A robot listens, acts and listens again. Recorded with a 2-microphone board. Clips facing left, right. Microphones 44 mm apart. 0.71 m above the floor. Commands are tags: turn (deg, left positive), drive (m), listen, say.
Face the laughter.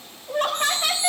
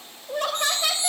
<turn deg="40"/>
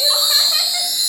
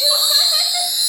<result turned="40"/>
<listen/>
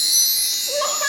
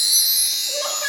<turn deg="105"/>
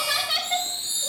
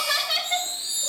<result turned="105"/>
<turn deg="10"/>
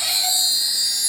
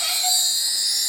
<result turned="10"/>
<listen/>
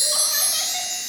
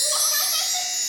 <listen/>
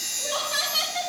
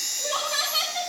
<say>Facing the laughter, over 4 m away.</say>